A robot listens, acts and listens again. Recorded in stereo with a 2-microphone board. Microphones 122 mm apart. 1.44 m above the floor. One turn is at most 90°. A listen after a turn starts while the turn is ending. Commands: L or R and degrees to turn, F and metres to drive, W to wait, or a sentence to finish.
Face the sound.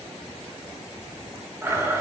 R20
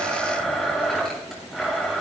Facing the blender, over 4 m away.